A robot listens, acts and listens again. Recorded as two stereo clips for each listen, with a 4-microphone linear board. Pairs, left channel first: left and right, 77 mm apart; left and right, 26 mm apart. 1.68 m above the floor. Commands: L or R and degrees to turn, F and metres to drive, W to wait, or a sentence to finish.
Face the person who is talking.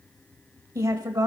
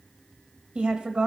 R50
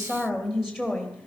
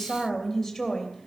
Found it: a woman speaking, straight ahead.